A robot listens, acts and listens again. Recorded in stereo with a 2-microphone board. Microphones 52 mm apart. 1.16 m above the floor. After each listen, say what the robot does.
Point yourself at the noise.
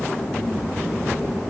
Keep listening.
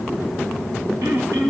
Turn 90° right.
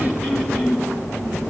Facing the throat clearing.